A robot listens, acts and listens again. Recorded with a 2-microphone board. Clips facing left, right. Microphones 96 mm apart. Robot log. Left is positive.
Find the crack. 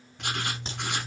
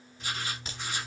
note: The crack: about 25° left or 155° left.
cmd yaw +25
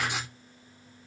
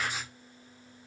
cmd idle
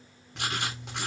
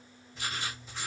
end: I heard a crack, but can't make it out now. It was about straight ahead or 130° left.